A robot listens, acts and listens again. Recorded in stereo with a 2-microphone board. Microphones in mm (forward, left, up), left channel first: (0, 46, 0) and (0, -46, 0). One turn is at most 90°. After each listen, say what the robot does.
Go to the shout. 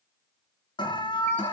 Keep listening.
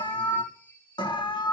Keep listening.
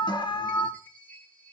I can't make out a shout to turn to.